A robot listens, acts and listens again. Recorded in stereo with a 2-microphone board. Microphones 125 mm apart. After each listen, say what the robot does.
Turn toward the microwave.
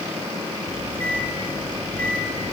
Turn 30° left.
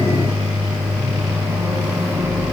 Turn 15° right.
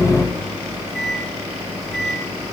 Found it: a microwave, straight ahead.